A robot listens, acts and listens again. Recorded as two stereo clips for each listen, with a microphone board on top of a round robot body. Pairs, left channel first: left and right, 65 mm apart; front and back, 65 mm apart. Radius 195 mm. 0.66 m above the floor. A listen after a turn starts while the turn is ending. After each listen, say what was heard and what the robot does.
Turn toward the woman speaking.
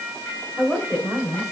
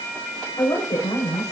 The woman speaking: 10° right. Turn 10° right.
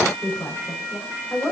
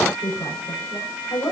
The woman speaking is now 10° right. Turn 10° right.
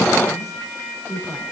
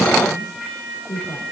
Facing the woman speaking, over 4 m away.